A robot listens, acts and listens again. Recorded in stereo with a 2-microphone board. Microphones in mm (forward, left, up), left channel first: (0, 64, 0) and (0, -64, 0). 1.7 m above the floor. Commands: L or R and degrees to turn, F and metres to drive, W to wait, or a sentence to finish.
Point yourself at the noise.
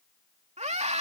R60
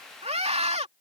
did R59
R55
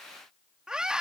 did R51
Found it: a scream, straight ahead.